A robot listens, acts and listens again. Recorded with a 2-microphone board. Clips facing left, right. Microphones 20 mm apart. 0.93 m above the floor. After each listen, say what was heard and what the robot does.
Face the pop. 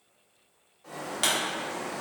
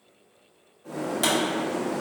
The pop: about 20° left or 160° left. Turn 20° left.
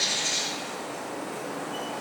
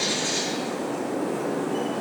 Keep listening.
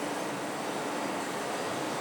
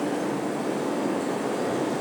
I heard a pop, but can't make it out now. It was about straight ahead or 140° left.